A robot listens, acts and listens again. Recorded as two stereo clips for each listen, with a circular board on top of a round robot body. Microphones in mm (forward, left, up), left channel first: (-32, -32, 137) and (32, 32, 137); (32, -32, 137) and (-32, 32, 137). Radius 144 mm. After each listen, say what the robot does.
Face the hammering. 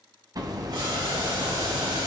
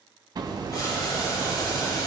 Turn 90° left.
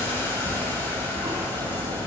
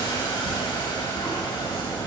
Turn 15° left.
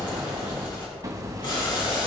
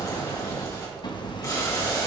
Turn 10° right.
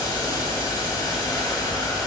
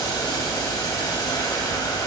Facing the hammering, 1 to 2 m away.